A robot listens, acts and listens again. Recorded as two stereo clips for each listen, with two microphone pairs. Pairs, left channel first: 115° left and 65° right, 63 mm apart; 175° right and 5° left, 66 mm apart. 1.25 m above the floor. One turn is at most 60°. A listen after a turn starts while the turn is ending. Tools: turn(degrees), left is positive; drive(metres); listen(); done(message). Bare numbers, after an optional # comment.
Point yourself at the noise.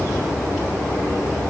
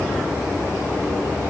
listen()
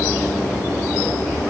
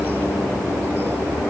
listen()
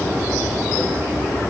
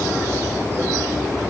done("I can't make out anything.")